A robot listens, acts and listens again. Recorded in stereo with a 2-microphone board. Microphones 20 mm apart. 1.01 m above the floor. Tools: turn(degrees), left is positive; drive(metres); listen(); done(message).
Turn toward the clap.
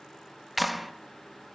turn(degrees=30)
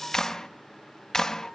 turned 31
turn(degrees=150)
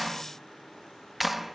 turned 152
done("Found it: a clap, straight ahead.")